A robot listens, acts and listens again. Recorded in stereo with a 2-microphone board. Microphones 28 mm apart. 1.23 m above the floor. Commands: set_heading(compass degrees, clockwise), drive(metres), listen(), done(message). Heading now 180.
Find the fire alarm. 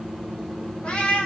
listen()
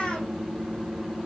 listen()
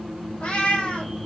done("I can't make out a fire alarm, only a cat meowing.")